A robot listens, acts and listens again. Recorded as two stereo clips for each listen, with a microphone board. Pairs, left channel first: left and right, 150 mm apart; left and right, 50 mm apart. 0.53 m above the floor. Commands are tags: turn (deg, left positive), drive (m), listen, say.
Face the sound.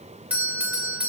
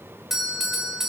<turn deg="-30"/>
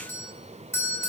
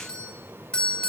<turn deg="20"/>
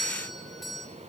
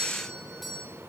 <say>Facing the doorbell, 2 to 4 m away.</say>